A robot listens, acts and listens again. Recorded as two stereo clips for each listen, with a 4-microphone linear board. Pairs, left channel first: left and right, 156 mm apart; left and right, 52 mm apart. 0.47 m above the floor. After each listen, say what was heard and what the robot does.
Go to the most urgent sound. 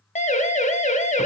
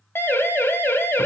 The siren: about 50° left or 130° left. Turn 50° left.
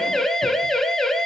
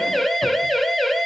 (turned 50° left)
Drive 1.0 m forward.
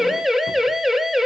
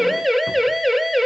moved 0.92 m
Drive 1.0 m forward.
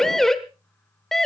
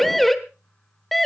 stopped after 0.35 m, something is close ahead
Arrived at the siren, straight ahead.